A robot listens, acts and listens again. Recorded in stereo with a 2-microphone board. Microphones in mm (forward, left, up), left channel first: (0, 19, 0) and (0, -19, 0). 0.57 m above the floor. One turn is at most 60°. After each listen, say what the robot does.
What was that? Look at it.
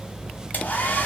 Turn 45° left.
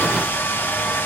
Turn 60° left.
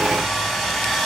Facing the hair dryer, 1 to 2 m away.